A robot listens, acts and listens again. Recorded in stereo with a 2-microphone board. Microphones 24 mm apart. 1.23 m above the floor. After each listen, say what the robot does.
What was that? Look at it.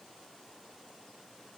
Keep listening.
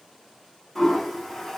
Turn 30° left.
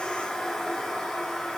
Turn 140° left.
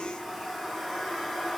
Turn 10° left.
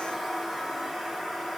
Facing the toilet flushing, 1 to 2 m away.